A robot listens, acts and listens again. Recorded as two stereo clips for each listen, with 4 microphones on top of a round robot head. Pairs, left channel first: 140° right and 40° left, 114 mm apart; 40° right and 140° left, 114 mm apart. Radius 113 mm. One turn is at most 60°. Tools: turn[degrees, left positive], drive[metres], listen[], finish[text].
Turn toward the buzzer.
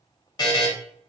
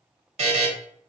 Thought: The buzzer: 165° left.
Action: turn[60]
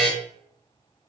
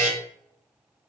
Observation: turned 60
Thought: The buzzer is now 125° left.
Action: turn[60]
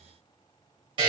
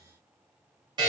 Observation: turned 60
Thought: The buzzer is now 80° left.
Action: turn[60]
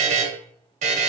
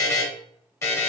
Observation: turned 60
Thought: The buzzer is now 25° left.
Action: turn[25]
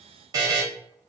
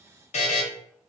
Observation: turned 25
Thought: The buzzer is now 20° right.
Action: turn[-20]
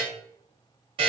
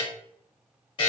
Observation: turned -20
Action: finish[Found it: a buzzer, straight ahead, under 1 m away.]